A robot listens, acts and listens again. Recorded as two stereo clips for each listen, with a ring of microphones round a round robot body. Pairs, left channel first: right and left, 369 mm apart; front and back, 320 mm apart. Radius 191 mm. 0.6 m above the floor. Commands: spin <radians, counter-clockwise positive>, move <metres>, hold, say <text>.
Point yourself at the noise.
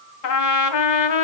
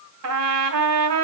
spin -2.27
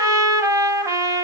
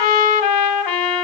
spin 0.17
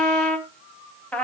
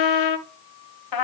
say Found it: a trumpet, straight ahead.